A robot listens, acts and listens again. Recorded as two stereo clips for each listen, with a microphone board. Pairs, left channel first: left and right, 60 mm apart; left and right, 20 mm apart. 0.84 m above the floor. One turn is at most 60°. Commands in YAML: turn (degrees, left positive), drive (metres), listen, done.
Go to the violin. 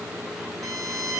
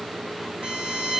turn: -60
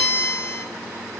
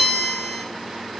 turn: -25
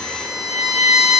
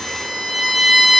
turn: -10
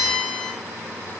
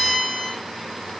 drive: 1.0
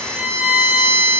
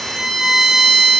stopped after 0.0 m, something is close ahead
done: "Something is in my way. I am facing the violin but have not reached it."